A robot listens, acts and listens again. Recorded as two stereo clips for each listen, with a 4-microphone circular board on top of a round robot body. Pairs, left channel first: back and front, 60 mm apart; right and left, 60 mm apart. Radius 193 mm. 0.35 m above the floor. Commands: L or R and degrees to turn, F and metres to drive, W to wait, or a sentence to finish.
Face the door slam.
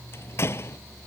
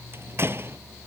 L135
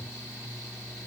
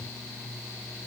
Facing where the door slam came from. I can't hear it now.